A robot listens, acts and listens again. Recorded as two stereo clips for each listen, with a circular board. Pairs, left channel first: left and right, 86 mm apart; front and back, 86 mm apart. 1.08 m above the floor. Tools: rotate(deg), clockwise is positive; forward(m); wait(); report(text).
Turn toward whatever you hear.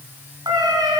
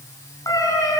rotate(55)
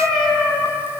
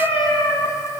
report("Facing the cat meowing, over 4 m away.")